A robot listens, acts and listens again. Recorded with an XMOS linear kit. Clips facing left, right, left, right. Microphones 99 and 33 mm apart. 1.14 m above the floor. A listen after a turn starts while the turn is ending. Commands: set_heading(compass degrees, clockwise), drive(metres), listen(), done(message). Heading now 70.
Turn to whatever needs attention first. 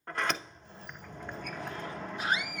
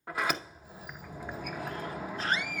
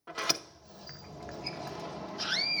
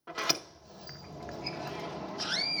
set_heading(40)
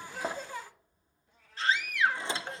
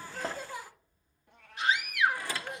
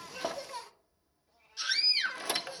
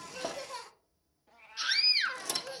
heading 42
set_heading(57)
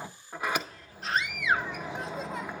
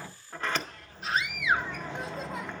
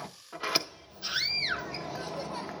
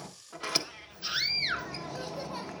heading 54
done("Facing the scream.")